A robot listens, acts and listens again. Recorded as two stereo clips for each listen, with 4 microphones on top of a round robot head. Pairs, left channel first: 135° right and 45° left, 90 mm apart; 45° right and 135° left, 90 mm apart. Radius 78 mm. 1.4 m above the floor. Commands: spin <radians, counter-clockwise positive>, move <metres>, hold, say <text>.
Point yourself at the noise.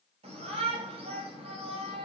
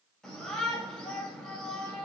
spin 0.70
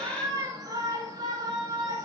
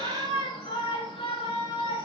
say Found it: a shout, straight ahead, over 4 m away.